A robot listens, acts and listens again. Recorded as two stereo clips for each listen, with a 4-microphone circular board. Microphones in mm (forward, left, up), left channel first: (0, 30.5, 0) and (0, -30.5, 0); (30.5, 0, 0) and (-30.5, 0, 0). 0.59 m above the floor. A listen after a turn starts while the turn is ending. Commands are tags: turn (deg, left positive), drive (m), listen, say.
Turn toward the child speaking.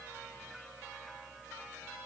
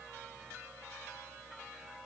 <listen/>
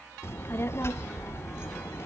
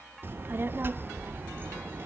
<turn deg="130"/>
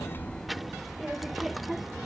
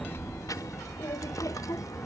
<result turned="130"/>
<say>Found it: a child speaking, straight ahead, under 1 m away.</say>